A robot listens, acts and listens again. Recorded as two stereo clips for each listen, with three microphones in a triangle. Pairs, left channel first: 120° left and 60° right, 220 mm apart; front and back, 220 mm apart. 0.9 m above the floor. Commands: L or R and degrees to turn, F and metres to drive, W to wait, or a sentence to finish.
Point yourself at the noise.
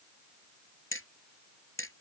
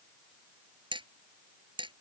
L115
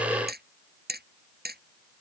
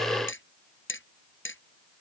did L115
R20
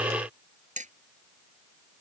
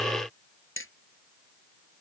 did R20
Facing the hammering.